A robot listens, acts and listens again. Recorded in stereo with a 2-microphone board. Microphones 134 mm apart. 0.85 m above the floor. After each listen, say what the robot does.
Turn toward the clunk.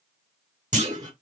Turn 60° right.
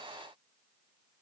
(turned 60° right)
Keep listening.
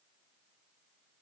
I heard a clunk, but can't make it out now. It was about straight ahead or 60° right.